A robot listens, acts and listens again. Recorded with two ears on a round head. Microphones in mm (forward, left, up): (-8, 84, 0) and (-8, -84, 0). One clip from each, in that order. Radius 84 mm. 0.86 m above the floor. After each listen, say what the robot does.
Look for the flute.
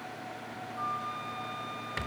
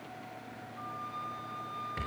Turn 55° left.
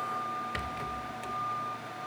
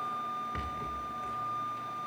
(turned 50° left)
Facing the flute.